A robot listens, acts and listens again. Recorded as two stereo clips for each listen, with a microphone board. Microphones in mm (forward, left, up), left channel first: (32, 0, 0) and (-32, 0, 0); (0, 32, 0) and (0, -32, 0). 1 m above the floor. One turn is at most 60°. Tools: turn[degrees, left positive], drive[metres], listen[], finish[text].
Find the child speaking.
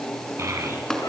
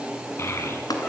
Thought: The child speaking: 140° left.
Action: turn[60]
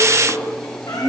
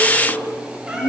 Thought: The child speaking is now 110° left.
Action: turn[60]
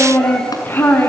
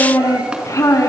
Thought: The child speaking is now 60° left.
Action: turn[60]
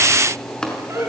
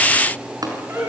Action: finish[Found it: a child speaking, straight ahead.]